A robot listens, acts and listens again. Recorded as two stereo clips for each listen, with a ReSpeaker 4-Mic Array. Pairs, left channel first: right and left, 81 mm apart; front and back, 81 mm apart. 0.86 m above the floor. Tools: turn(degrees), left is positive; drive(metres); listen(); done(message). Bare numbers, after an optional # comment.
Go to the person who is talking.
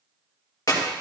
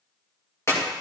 listen()
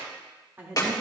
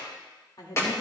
# The woman speaking: 25° left.
turn(25)
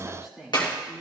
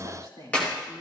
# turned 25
drive(1.0)
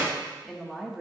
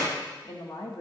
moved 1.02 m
drive(1.0)
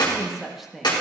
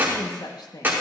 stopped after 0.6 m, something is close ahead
done("Arrived at the woman speaking, straight ahead.")